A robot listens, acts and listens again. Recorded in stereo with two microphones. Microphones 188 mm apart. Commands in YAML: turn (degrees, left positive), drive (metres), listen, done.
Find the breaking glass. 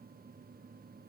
listen: true
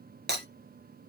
turn: -60
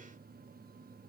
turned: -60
listen: true
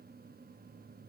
done: "I heard breaking glass, but can't make it out now. It was about straight ahead or 60° right."